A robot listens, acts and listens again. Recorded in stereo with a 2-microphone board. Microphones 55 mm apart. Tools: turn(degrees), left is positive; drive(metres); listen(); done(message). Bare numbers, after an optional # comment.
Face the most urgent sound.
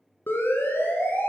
# The siren: about 45° left or 135° left.
turn(45)
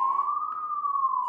done("Facing the siren.")